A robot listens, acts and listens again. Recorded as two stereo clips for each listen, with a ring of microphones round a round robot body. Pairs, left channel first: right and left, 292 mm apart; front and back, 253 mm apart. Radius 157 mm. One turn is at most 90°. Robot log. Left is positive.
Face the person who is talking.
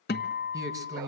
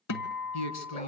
note: The man speaking: 10° left.
cmd yaw +10
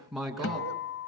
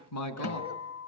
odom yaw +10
end: Found it: a man speaking, straight ahead, 2 to 4 m away.